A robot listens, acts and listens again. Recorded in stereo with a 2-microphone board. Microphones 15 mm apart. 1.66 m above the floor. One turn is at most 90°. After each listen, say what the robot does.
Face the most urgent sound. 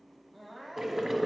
Turn 30° left.
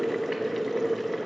Keep listening.
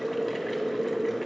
Keep listening.
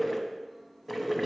I heard crying, but can't make it out now. It was about straight ahead or 120° left.